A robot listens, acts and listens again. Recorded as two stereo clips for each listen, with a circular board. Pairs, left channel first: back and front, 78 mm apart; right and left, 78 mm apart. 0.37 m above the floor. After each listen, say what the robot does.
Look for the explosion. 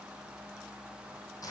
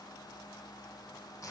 Keep listening.
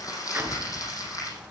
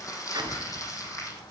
Turn 65° left.
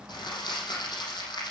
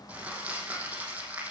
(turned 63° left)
I heard an explosion from this way, but can't make it out now.